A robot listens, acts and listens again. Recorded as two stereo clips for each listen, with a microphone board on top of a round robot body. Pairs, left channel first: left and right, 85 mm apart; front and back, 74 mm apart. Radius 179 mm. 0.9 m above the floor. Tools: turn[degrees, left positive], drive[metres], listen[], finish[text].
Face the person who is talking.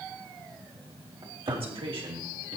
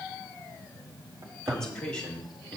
Thought: The man speaking: 75° right.
Action: turn[-75]
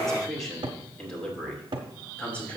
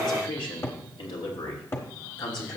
Thought: The man speaking is now 15° left.
Action: turn[15]
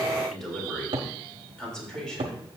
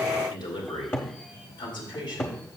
Thought: The man speaking is now 10° left.
Action: turn[10]
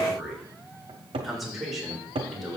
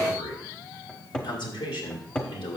Action: finish[Facing the man speaking, 2 to 4 m away.]